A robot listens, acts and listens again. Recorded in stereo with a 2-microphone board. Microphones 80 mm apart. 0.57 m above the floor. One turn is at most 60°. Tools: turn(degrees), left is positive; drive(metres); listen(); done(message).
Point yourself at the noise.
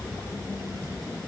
listen()
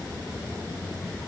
listen()
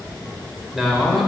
turn(degrees=30)
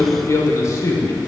turn(degrees=60)
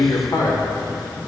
turn(degrees=45)
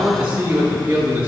turn(degrees=-20)
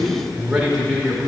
done("Found it: a man speaking, straight ahead.")